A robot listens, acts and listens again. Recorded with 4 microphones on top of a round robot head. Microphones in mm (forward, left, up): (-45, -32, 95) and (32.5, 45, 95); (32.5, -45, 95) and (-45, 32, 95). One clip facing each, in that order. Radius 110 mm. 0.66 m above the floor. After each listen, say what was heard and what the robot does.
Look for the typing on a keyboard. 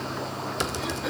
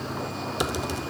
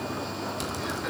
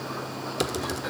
The typing on a keyboard: 120° left. Turn 120° left.
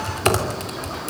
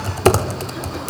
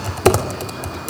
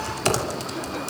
The typing on a keyboard is now 10° right. Turn 10° right.
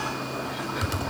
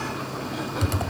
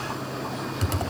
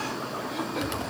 Facing the typing on a keyboard, 2 to 4 m away.